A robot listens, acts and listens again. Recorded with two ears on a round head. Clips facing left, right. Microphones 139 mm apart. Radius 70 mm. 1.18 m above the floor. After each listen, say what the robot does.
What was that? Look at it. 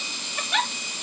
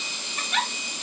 Turn 55° left.
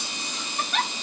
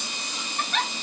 Facing the giggle, under 1 m away.